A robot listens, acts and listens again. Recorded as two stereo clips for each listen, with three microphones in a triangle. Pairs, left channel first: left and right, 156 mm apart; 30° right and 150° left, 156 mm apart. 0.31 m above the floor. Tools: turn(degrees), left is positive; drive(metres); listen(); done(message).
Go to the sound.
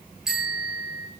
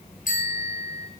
drive(metres=1.0)
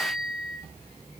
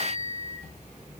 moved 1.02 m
drive(metres=1.0)
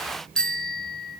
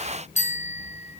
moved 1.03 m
drive(metres=1.0)
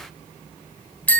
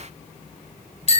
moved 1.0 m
turn(degrees=10)
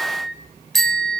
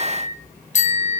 drive(metres=1.0)
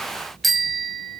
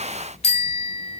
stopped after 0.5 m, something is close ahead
done("Arrived at the bicycle bell, straight ahead.")